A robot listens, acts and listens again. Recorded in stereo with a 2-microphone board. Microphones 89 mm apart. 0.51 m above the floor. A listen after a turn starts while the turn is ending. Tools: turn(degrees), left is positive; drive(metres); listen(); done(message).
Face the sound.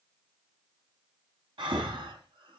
turn(degrees=-70)
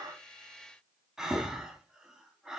done("Found it: breathing, straight ahead.")